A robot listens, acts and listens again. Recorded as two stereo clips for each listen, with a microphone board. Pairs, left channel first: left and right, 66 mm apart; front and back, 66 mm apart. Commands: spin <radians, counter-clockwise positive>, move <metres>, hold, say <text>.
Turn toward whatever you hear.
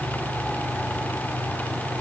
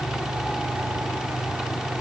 hold
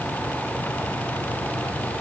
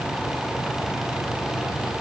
hold
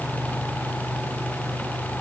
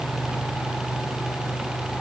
say I can't make out anything to turn to.